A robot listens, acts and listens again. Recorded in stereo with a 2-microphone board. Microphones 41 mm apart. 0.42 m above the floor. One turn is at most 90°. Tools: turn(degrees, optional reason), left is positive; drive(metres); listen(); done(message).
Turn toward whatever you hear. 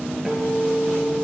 turn(degrees=-30)
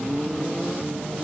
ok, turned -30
listen()
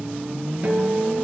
turn(degrees=-90, reason="So it is at 145° right.")
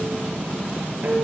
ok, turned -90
turn(degrees=-45, reason="The guitar is now 45° right.")
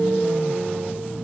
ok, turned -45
turn(degrees=-20, reason="The guitar is now 20° right.")
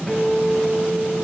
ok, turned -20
done("Facing the guitar.")